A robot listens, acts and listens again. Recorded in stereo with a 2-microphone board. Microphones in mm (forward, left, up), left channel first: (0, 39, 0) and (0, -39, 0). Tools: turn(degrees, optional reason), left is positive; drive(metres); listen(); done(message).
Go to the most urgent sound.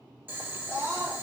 turn(degrees=-20, reason="The scream: about 20° right or 160° right.")
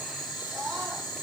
listen()
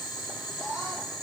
turn(degrees=-140, reason="So it is at 140° right.")
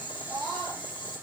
turn(degrees=-45, reason="The scream is now 45° right.")
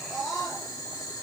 drive(metres=1.0)
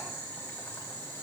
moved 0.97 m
listen()
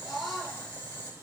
drive(metres=1.0)
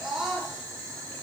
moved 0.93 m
drive(metres=1.0)
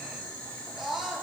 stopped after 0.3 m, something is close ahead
done("Arrived at the scream, straight ahead.")